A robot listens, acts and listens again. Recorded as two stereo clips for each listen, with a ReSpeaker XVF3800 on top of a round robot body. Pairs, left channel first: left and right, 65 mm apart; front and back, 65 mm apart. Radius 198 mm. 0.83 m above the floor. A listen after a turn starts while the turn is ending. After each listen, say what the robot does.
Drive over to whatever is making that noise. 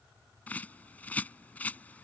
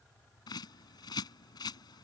Turn 20° left.
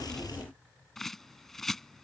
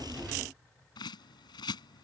Drive 1.0 m forward.
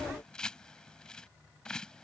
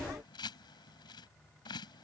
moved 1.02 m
Turn 10° left.
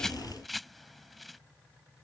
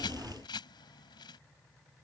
Drive 1.0 m forward.
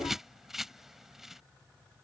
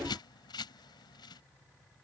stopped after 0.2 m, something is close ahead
Arrived at the bird, straight ahead.